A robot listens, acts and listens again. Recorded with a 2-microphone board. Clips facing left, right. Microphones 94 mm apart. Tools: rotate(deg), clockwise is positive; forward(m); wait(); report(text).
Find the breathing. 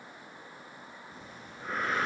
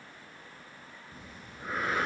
rotate(-30)
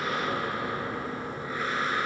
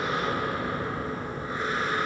rotate(30)
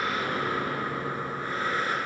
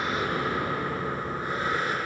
rotate(20)
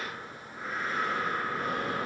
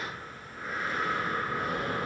report("Found it: breathing, straight ahead, over 4 m away.")